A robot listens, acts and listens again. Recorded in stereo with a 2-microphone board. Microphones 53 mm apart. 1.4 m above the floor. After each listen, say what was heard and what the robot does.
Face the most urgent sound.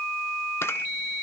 Keep listening.
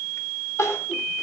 The crying: about 65° left or 115° left. Turn 65° left.
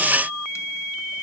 Keep listening.
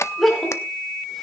Facing the crying, 2 to 4 m away.